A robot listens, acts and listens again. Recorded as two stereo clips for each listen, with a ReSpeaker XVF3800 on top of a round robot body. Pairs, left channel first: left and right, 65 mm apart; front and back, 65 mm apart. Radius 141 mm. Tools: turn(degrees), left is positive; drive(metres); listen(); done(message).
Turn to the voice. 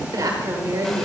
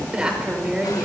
turn(degrees=-105)
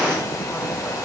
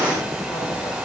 listen()
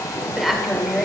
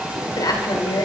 done("Facing the woman speaking.")